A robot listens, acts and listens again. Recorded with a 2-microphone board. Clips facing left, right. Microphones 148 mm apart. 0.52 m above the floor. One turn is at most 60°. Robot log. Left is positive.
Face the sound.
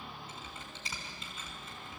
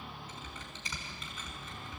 note: The typing on a keyboard: about 30° left or 150° left.
cmd yaw +30
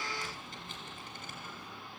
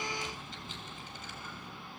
note: So it is at 120° left.
cmd yaw +60
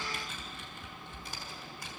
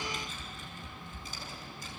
note: The typing on a keyboard is now 60° left.
cmd yaw +60
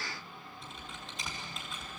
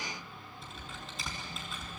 end: Found it: typing on a keyboard, straight ahead, over 4 m away.